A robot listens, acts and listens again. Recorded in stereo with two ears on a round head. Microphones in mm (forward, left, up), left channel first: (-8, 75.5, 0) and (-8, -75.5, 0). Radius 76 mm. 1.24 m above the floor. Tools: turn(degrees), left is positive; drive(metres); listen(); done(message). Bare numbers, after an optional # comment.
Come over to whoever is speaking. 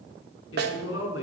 turn(90)
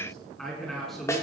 drive(1.0)
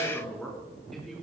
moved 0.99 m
drive(1.0)
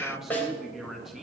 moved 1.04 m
drive(1.0)
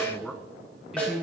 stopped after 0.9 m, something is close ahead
done("I am next to the woman speaking.")